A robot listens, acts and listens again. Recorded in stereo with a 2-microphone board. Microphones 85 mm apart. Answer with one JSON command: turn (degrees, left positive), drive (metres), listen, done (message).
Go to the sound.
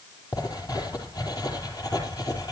{"turn": 50}
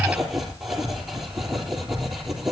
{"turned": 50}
{"drive": 1.0}
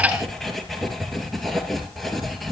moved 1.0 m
{"drive": 1.0}
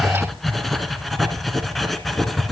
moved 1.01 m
{"drive": 1.0}
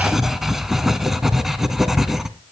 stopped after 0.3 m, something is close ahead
{"done": "I am next to the writing."}